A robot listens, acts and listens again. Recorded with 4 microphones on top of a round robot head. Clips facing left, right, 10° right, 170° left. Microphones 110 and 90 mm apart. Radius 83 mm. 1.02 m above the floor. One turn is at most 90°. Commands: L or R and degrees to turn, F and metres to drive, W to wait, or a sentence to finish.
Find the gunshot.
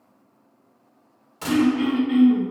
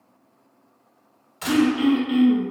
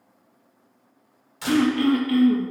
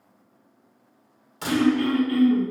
L90
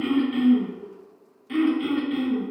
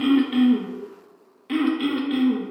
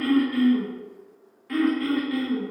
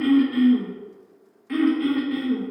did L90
L45
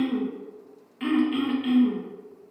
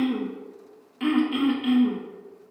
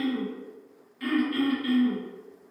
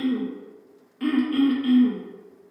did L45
Facing where the gunshot came from. I can't hear it now.